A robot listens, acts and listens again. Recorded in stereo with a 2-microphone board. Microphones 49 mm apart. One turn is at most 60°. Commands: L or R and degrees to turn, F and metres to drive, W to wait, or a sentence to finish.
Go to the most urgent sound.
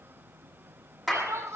R60
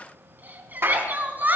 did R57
R35
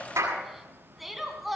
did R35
F1.0
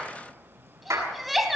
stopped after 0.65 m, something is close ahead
Blocked. The crying is further on, straight ahead.